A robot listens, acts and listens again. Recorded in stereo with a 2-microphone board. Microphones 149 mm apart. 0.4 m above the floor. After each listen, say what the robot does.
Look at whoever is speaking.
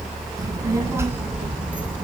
Turn 30° right.
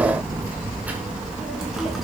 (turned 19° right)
Turn 30° left.
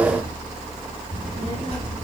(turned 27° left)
Turn 140° left.
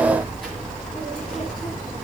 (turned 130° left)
Found it: a child speaking, straight ahead.